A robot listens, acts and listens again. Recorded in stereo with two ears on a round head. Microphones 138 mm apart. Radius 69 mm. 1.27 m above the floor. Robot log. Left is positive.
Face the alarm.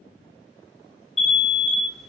cmd yaw +30
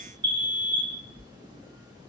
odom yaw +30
note: So it is at 30° right.
cmd yaw -30
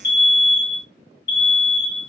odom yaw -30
note: The alarm is now 30° left.
cmd yaw +30
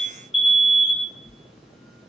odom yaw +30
end: Facing the alarm.